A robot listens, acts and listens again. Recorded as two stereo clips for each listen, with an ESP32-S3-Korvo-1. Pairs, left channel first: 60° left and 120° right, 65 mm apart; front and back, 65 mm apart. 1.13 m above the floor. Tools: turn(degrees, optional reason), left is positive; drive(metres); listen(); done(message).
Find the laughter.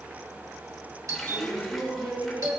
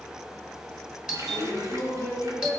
turn(degrees=-150, reason="The laughter: 150° right.")
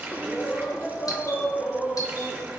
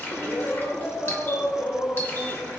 turn(degrees=-15, reason="The laughter is now 15° right.")
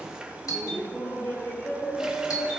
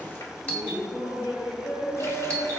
done("Found it: laughter, straight ahead.")